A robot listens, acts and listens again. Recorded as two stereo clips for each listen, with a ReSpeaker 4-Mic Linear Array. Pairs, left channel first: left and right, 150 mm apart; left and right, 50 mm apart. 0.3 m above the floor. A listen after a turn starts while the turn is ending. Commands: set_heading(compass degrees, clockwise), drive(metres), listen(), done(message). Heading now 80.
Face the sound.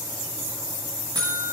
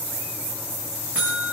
set_heading(105)
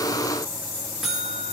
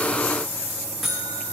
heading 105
done("Facing the buzzer.")